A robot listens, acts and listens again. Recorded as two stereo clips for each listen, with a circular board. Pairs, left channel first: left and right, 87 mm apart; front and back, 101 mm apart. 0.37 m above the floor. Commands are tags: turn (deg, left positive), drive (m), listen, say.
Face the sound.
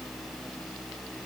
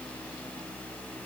<listen/>
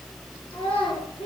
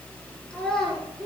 <turn deg="85"/>
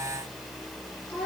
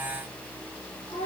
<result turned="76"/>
<turn deg="15"/>
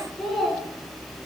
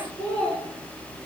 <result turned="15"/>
<say>Facing the child speaking, 2 to 4 m away.</say>